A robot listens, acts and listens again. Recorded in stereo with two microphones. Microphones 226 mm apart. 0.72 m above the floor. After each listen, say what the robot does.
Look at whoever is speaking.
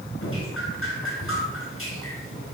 Keep listening.
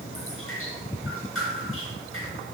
Keep listening.
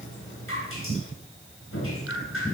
I can't make out anyone speaking, only dripping.